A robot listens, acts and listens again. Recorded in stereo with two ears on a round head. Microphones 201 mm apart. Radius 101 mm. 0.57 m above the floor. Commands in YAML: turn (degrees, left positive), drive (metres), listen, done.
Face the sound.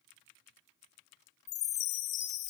turn: 35
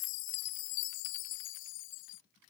turn: 110
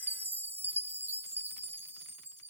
turn: -10
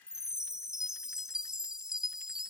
done: "Found it: a chime, straight ahead."